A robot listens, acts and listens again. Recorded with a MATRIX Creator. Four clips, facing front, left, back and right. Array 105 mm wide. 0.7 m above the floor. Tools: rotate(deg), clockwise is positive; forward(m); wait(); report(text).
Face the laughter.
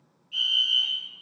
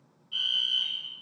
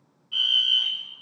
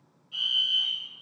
wait()
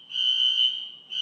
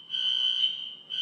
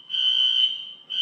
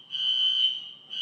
wait()
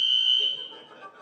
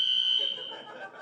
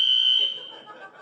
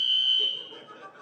rotate(-110)
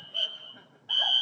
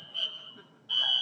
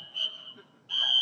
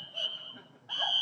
rotate(35)
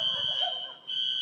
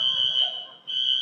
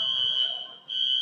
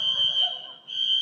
wait()
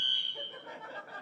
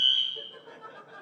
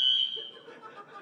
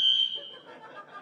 report("Facing the laughter, over 4 m away.")